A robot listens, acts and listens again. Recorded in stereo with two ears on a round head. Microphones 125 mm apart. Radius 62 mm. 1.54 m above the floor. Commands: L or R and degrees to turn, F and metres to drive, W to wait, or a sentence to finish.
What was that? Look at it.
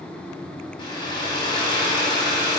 L35
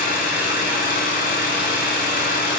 L110
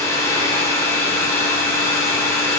L20
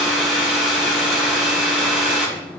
Facing the hair dryer, under 1 m away.